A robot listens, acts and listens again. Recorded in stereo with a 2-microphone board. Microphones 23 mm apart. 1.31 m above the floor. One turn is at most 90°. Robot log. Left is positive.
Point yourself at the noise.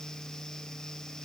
cmd idle
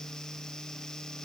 cmd idle
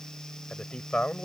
note: The man speaking: about 50° left or 130° left.
cmd yaw +50
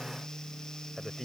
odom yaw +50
end: Facing the man speaking.